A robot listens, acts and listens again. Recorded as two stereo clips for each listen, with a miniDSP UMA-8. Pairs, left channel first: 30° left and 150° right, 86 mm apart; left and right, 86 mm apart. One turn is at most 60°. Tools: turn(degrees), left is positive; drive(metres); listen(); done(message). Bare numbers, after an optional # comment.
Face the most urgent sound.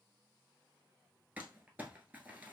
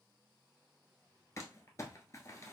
listen()
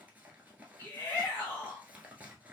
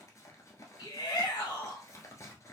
# The shout: 90° left.
turn(60)
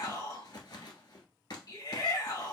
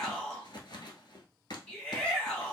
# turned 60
# The shout is now 15° left.
turn(15)
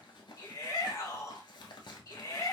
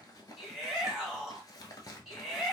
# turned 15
done("Found it: a shout, straight ahead, 1 to 2 m away.")